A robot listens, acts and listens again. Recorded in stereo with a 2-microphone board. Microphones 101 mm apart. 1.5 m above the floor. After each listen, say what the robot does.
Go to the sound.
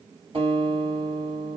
Turn 60° right.
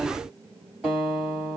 Drive 1.0 m forward.
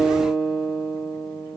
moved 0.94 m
Turn 10° right.
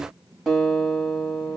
Drive 1.0 m forward.
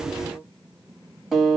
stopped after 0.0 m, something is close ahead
I am next to the guitar.